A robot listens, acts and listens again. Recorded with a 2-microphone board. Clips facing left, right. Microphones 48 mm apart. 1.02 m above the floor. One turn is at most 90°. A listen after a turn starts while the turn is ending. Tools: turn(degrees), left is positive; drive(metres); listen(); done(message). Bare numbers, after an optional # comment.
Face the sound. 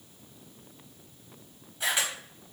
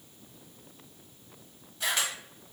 turn(30)
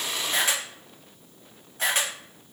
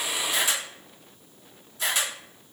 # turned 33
# So it is at 135° left.
turn(90)
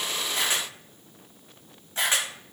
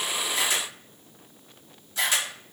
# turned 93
# The camera shutter is now 40° left.
turn(40)
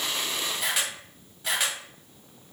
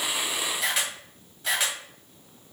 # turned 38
done("Found it: a camera shutter, straight ahead.")